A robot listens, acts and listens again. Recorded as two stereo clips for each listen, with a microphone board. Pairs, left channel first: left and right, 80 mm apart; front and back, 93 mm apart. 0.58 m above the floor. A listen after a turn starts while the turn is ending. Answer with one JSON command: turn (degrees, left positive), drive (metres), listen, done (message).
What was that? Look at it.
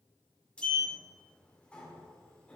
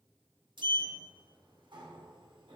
{"turn": 165}
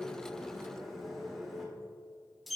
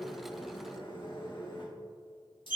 {"done": "Facing the sliding door, 1 to 2 m away."}